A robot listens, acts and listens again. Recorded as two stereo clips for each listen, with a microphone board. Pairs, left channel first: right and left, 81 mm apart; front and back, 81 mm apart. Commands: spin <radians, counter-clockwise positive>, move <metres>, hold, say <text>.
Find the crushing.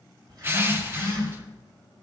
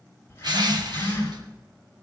spin 2.62
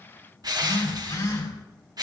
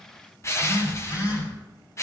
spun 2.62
spin 0.96
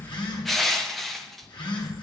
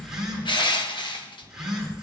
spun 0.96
say Found it: crushing, straight ahead, 1 to 2 m away.